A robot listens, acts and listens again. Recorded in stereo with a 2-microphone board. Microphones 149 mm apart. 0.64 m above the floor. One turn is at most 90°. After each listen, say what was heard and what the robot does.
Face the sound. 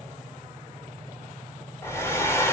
The hair dryer: about 15° left or 165° left. Turn 15° left.
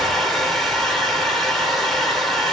Facing the hair dryer.